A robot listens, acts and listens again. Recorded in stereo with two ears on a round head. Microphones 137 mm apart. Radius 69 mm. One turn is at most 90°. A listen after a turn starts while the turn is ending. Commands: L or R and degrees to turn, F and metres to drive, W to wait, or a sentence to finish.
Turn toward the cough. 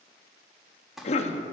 L45
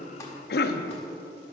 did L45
L90
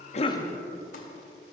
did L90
W
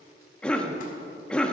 Facing the cough, under 1 m away.